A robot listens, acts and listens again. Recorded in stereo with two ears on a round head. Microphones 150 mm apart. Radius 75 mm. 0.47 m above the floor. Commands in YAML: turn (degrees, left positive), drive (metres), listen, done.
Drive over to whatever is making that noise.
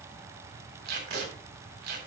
turn: -70
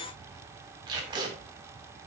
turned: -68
turn: -30
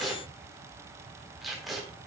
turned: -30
drive: 1.0
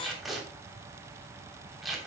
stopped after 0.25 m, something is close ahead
done: "Blocked. The tape being pulled is further on, straight ahead."